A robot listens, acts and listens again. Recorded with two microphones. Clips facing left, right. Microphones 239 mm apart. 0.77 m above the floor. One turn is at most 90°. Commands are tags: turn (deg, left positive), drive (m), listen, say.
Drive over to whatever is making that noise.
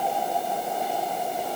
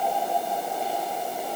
<listen/>
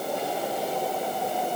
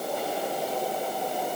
<listen/>
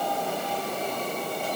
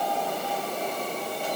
<say>I can't make out anything to turn to.</say>